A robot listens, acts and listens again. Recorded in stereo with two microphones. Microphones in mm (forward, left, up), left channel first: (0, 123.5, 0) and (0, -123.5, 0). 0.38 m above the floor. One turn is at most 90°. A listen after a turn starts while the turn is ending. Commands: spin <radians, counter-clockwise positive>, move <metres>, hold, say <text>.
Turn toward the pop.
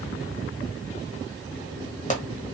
spin 0.52
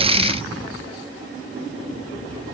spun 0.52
hold
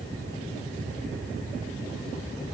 say I heard a pop, but can't make it out now. It was about straight ahead or 120° left.